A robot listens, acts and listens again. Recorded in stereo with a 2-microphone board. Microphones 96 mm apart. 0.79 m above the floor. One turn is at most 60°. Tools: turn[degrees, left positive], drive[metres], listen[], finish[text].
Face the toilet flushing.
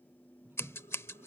Thought: The toilet flushing: about 25° right or 155° right.
Action: turn[-25]
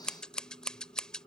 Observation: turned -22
Action: listen[]
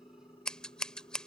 Action: listen[]
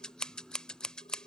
Action: finish[I heard a toilet flushing, but can't make it out now. It was about straight ahead or 135° right.]